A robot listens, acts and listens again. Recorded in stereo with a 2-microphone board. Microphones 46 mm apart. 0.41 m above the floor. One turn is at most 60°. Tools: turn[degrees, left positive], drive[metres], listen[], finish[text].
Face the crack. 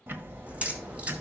Thought: The crack: about 25° right or 155° right.
Action: turn[-25]
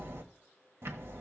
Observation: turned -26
Action: listen[]
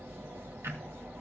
Action: finish[I heard a crack, but can't make it out now. It was about straight ahead or 125° right.]